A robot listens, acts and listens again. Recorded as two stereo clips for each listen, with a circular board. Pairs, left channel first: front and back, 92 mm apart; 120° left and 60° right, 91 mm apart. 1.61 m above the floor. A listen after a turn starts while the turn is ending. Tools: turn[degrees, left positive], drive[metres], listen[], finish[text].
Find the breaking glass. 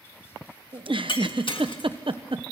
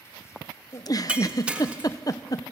Thought: The breaking glass: 15° left.
Action: turn[15]
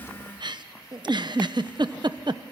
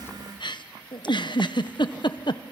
Action: finish[Facing where the breaking glass came from. I can't hear it now.]